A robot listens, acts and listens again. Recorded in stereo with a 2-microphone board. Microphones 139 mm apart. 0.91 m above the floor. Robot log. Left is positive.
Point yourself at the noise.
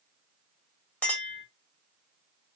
cmd yaw +30
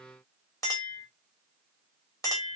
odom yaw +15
note: So it is at 155° left.
cmd yaw +155
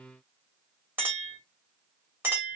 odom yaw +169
note: The clink is now 15° right.
cmd yaw -15
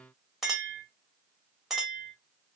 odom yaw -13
end: Facing the clink.